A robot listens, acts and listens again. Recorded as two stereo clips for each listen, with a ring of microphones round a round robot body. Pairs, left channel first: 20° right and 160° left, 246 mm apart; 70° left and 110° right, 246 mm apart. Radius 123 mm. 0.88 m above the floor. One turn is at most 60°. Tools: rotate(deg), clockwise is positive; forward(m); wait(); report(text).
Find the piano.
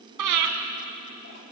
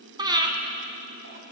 wait()
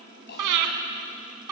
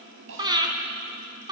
wait()
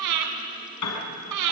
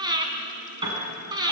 rotate(40)
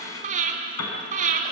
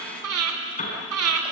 report("Found it: a piano, straight ahead.")